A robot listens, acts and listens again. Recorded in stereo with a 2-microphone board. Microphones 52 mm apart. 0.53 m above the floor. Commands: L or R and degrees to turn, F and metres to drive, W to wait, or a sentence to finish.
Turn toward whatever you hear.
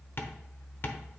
L50
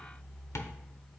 L75
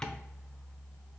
L15
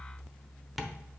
Facing the tapping, under 1 m away.